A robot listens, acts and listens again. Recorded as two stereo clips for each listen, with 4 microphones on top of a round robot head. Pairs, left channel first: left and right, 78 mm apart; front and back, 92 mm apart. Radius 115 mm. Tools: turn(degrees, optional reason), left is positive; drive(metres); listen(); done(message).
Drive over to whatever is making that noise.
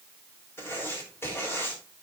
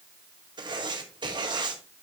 turn(degrees=150, reason="The writing: 150° left.")
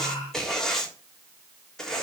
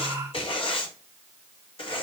drive(metres=1.0)
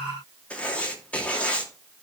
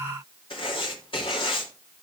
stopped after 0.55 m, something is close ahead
turn(degrees=20, reason="The writing is now 20° left.")
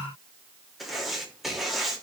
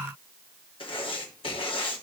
done("Something is in my way. I am facing the writing but have not reached it.")